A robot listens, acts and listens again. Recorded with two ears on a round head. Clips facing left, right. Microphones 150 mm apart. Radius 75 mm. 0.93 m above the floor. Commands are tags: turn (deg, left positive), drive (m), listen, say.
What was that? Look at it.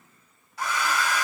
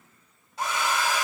<turn deg="-20"/>
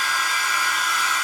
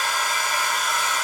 <turn deg="-140"/>
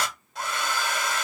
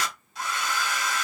<turn deg="45"/>
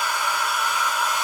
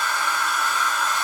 <turn deg="15"/>
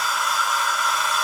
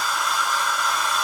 <say>Facing the hair dryer.</say>